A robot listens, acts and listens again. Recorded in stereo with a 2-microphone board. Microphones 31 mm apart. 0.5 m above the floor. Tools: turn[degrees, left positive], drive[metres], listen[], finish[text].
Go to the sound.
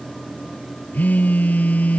Thought: The phone buzzing: about 65° left or 115° left.
Action: turn[65]
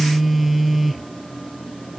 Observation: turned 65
Action: drive[1.0]
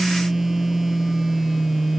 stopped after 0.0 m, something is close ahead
Thought: The phone buzzing is now 10° right.
Action: turn[-10]
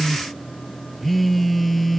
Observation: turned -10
Action: finish[Blocked. The phone buzzing is further on, straight ahead.]